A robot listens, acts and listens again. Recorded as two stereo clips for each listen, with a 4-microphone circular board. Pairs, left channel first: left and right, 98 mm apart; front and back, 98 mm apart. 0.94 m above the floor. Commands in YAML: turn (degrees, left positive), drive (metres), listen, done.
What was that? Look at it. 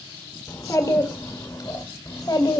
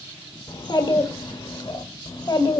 turn: 45
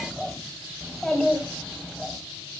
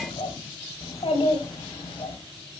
done: "Found it: a child speaking, straight ahead, 2 to 4 m away."